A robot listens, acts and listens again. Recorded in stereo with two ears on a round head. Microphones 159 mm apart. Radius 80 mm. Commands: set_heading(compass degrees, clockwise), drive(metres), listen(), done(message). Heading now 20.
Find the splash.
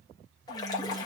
set_heading(0)
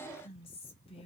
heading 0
listen()
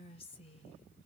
done("I heard a splash, but can't make it out now. It was about straight ahead or 140° left.")